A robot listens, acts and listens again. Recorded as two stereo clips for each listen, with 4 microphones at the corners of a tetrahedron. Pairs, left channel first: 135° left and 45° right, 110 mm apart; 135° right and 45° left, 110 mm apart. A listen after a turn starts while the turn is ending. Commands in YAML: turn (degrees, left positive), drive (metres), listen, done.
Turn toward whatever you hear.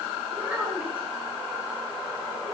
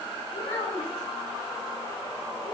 turn: -120
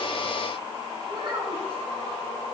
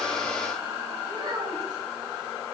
done: "Facing the child speaking, 2 to 4 m away."